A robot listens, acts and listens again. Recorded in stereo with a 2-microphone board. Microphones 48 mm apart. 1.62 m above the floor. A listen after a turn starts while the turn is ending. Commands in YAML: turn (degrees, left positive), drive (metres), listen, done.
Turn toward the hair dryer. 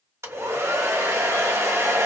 turn: -75
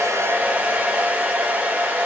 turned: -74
turn: -30
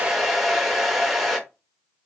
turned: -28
done: "Found it: a hair dryer, straight ahead, under 1 m away."